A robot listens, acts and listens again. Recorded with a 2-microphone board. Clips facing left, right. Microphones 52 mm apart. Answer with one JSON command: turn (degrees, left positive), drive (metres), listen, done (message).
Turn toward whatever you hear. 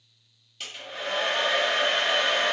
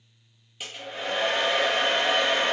{"turn": -30}
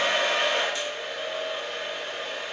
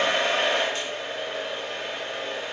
{"turn": -140}
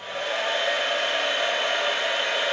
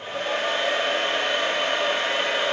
{"turn": -50}
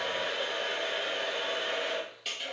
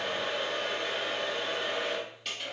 {"done": "Facing the hair dryer, 1 to 2 m away."}